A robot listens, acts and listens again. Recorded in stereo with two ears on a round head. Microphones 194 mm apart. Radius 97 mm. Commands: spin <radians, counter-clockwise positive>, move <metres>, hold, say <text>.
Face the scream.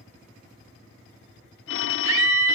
spin -1.22
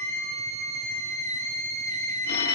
spin -0.61
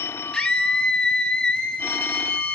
say Facing the scream, 2 to 4 m away.